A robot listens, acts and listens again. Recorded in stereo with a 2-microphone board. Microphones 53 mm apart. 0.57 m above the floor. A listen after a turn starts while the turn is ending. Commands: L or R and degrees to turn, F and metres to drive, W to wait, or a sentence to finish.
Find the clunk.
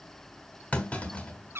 L30
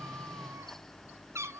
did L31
W
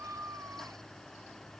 I heard a clunk, but can't make it out now. It was about straight ahead or 115° left.